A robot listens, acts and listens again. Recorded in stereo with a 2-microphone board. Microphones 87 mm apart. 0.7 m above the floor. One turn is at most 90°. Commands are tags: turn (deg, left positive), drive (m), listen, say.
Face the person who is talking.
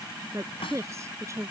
<turn deg="-35"/>
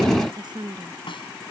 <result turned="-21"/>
<turn deg="-90"/>
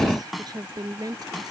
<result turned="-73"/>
<turn deg="-45"/>
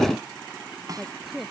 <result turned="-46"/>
<say>Found it: a woman speaking, straight ahead.</say>